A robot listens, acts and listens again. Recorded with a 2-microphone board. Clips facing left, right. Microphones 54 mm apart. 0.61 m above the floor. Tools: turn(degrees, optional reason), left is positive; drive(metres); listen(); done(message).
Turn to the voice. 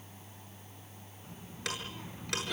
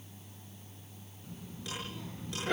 turn(degrees=25, reason="The child speaking: about 25° left or 155° left.")
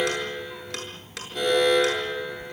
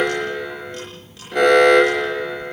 turn(degrees=30)
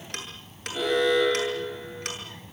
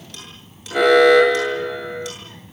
done("Facing the child speaking.")